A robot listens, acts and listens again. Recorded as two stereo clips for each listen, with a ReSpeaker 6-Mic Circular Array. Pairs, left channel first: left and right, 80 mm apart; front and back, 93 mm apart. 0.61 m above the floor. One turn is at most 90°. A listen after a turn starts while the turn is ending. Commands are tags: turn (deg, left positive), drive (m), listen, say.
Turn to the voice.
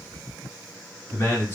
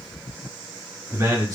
<turn deg="90"/>
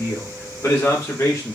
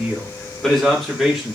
<turn deg="90"/>
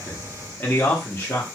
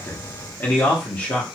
<turn deg="60"/>
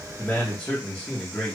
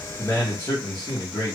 <turn deg="20"/>
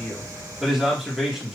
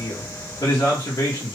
<say>Facing the man speaking, 1 to 2 m away.</say>